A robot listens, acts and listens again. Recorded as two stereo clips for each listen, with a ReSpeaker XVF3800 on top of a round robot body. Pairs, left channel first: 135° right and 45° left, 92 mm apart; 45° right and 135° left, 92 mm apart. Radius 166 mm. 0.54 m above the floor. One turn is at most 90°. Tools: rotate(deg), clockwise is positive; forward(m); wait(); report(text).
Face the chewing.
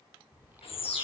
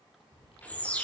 rotate(25)
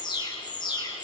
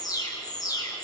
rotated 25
wait()
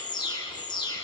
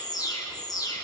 wait()
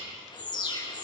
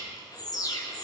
report("Facing where the chewing came from. I can't hear it now.")